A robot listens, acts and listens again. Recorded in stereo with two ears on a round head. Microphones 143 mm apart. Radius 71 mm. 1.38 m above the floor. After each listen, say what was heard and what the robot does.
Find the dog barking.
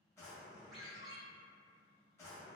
Keep listening.
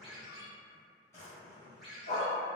The dog barking: about 55° left or 125° left. Turn 55° left.
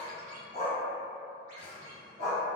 So it is at 50° left. Turn 50° left.
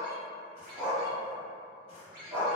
The dog barking is now 10° right. Turn 10° right.
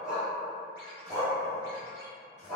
Found it: a dog barking, straight ahead.